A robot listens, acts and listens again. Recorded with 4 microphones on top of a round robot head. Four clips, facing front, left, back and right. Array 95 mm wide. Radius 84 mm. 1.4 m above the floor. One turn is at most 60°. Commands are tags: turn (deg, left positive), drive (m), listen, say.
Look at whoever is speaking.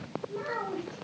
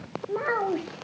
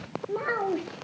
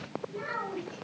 <turn deg="60"/>
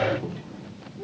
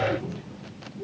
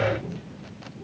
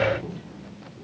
<turn deg="25"/>
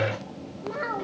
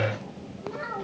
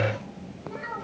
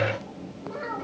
<turn deg="-15"/>
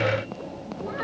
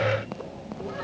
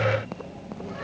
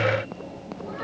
<listen/>
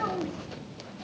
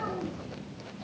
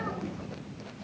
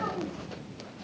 <listen/>
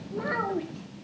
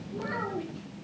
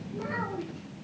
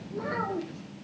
<turn deg="-20"/>
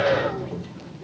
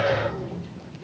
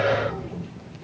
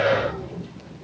<listen/>
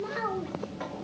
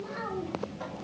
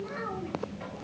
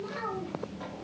<say>Facing the child speaking, 2 to 4 m away.</say>